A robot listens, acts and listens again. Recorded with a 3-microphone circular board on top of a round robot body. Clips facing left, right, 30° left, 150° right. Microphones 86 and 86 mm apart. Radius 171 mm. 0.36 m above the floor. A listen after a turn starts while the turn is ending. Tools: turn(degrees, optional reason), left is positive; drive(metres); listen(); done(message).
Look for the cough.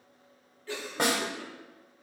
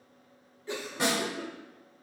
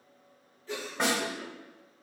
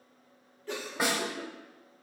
turn(degrees=-160, reason="The cough: 160° right.")
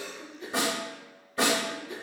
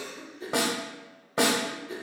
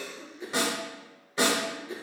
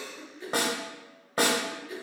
turn(degrees=-30, reason="The cough is now 30° right.")
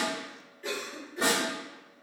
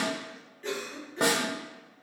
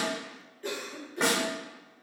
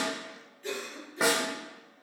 turn(degrees=10, reason="The cough is now 10° left.")
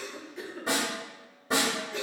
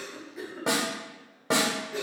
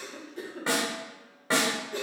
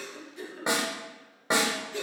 done("Found it: a cough, straight ahead.")